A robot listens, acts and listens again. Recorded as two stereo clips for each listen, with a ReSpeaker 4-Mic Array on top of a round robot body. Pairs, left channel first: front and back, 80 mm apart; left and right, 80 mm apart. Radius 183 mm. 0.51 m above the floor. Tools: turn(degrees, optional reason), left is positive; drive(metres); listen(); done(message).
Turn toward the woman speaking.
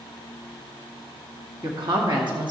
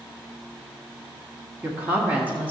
turn(degrees=-165, reason="The woman speaking: 165° right.")
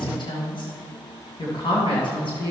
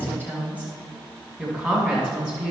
turn(degrees=15, reason="The woman speaking is now 15° left.")
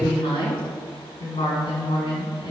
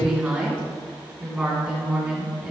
done("Found it: a woman speaking, straight ahead, 2 to 4 m away.")